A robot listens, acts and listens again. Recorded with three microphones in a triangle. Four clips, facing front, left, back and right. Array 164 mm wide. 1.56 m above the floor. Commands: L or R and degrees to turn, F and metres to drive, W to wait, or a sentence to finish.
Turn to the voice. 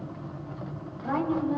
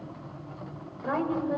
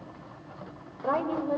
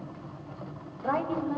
L175
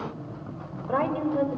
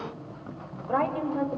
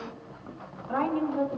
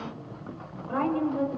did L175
L25
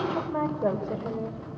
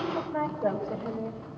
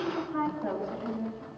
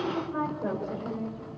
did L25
L10
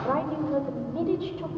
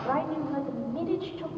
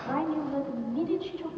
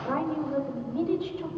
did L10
Facing the woman speaking, over 4 m away.